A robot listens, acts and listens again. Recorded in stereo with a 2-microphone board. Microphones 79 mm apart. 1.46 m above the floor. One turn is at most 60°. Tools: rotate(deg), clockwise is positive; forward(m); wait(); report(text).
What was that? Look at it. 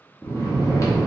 rotate(-40)
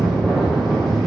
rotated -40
report("Facing the snoring, under 1 m away.")